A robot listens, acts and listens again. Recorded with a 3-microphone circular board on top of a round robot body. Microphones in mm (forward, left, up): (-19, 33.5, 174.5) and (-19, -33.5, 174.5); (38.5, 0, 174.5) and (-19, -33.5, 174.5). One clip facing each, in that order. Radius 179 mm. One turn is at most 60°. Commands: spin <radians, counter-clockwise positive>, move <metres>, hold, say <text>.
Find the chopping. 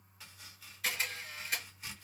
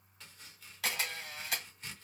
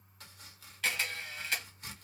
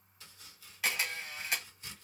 say Facing the chopping.